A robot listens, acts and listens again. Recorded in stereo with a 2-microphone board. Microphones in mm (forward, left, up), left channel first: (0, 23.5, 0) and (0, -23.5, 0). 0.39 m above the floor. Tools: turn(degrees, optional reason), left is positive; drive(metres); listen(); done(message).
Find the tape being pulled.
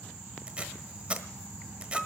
turn(degrees=-25, reason="The tape being pulled: about 25° right or 155° right.")
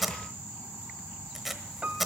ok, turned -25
done("Found it: tape being pulled, straight ahead, 1 to 2 m away.")